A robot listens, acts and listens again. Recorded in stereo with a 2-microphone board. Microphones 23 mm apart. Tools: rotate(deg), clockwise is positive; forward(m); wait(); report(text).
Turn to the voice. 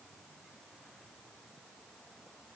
wait()
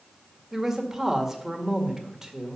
rotate(15)
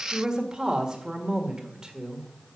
rotate(150)
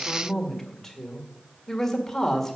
rotate(-20)
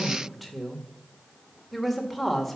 report("Found it: a woman speaking, straight ahead.")